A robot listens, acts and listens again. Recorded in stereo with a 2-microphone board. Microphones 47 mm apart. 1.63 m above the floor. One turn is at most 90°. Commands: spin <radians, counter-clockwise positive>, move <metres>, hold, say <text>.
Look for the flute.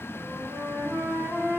spin -1.05
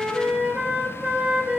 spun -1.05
spin -0.44
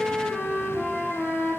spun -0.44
spin -0.17
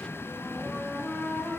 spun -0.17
say Facing the flute.